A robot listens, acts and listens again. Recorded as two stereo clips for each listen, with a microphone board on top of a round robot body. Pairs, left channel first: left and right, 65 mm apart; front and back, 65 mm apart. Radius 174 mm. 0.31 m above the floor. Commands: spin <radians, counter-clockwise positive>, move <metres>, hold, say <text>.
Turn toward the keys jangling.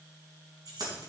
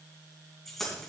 spin -1.48
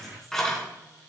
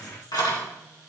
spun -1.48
say Facing the keys jangling.